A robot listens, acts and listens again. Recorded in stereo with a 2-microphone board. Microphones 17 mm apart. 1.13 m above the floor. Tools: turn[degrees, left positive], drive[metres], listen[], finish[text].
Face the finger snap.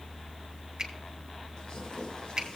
Thought: The finger snap: about 35° right or 145° right.
Action: turn[-35]
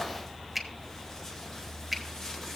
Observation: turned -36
Action: finish[Found it: a finger snap, straight ahead, 1 to 2 m away.]